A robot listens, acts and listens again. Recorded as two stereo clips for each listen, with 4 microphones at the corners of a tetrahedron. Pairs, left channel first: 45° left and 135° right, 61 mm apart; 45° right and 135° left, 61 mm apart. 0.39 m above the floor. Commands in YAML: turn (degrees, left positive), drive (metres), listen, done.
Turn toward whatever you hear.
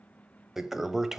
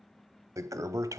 turn: 140
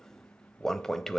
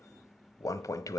turn: -40
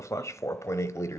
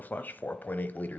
turn: 15
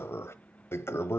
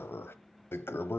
done: "Facing the toilet flushing."